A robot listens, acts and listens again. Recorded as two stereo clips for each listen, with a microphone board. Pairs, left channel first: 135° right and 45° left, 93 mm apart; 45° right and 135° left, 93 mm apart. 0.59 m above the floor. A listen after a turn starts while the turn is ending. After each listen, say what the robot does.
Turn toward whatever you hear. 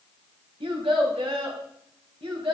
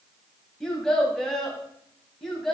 Turn 45° left.
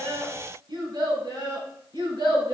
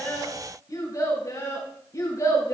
Turn 10° left.
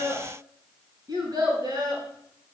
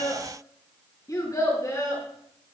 Found it: a child speaking, straight ahead, over 4 m away.